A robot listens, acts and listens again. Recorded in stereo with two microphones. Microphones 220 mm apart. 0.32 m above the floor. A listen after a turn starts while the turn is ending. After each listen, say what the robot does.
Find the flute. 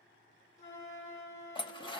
Turn 60° left.
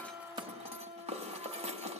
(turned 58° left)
Facing the flute.